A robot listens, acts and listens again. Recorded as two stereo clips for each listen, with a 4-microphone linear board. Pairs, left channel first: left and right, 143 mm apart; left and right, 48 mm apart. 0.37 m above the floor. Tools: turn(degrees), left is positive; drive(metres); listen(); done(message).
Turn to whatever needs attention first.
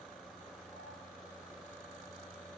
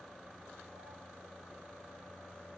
listen()
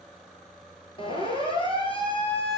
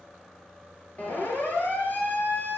turn(degrees=35)
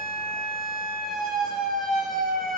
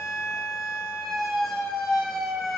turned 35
done("Found it: a siren, straight ahead, over 4 m away.")